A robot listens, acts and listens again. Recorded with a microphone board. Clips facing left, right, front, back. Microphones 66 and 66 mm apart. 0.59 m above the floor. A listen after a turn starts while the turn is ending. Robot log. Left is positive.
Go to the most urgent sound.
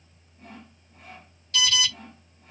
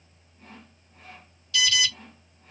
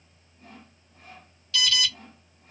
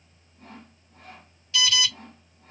note: The alarm: 120° left.
cmd yaw +120
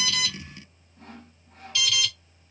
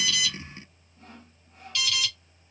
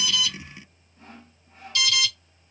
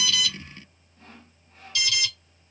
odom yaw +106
note: The alarm is now 10° left.
cmd yaw +10
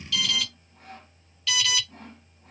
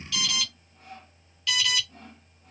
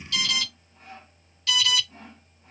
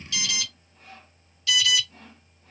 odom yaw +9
cmd fwd 1.0
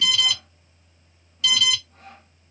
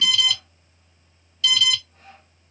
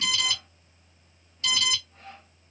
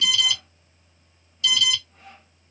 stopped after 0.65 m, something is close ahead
end: Arrived at the alarm, straight ahead.